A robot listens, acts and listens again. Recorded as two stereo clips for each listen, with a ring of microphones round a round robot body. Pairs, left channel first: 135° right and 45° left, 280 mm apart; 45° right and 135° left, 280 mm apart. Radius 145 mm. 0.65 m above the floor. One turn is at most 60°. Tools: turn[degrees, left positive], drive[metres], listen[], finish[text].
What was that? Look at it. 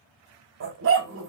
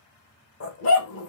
Action: finish[Found it: a dog barking, straight ahead.]